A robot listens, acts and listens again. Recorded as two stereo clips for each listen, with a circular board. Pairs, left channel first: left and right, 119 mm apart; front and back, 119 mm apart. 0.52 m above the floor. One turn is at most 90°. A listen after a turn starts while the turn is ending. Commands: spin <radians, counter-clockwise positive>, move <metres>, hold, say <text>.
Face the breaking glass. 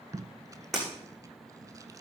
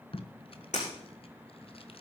say Facing the breaking glass, over 4 m away.